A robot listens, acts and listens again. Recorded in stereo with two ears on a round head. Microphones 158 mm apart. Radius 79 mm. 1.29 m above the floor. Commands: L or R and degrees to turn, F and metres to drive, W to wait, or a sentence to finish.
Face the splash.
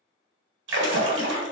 R75
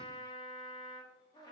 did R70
W
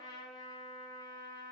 I heard a splash, but can't make it out now. It was about 5° right or 35° right.